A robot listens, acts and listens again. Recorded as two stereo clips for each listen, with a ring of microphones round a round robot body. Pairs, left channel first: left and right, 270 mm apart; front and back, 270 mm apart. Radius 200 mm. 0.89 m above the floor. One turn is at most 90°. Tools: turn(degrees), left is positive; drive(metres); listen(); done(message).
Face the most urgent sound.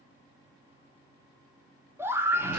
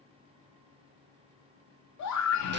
turn(degrees=-10)
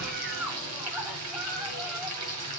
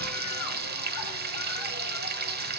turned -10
listen()
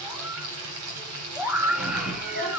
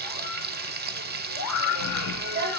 done("Facing the scream.")